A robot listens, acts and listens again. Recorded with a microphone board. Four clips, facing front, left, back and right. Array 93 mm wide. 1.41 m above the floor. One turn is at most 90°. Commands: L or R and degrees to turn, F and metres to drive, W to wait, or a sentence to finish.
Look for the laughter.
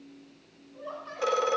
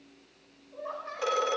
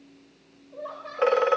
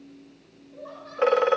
L90
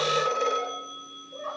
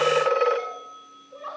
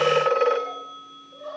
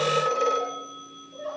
L70
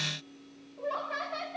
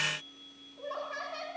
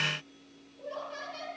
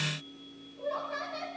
L15
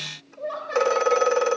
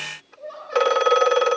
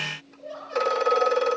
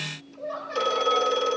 Facing the laughter.